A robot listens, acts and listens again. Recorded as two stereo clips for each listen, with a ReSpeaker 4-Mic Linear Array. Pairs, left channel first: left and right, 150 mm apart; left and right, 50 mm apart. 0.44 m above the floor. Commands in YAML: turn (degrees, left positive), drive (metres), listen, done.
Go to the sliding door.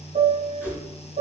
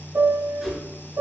listen: true
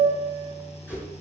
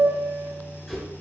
listen: true
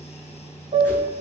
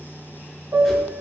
done: "I can't make out a sliding door, only a whoosh and a piano."